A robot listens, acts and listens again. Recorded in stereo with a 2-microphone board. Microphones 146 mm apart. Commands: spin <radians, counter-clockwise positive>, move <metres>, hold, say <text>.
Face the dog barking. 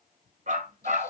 spin -1.13
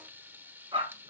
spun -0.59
spin -0.61
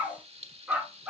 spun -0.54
spin -0.17
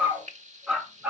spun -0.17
say Facing the dog barking, 2 to 4 m away.